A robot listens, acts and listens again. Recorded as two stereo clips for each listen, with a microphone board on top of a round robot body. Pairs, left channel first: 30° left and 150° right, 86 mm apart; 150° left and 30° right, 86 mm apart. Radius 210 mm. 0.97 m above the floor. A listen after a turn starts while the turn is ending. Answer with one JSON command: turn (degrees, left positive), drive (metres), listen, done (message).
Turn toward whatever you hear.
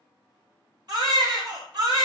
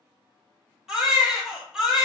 {"turn": -115}
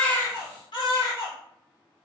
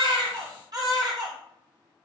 {"turn": 10}
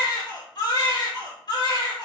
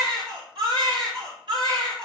{"done": "Found it: a baby crying, straight ahead."}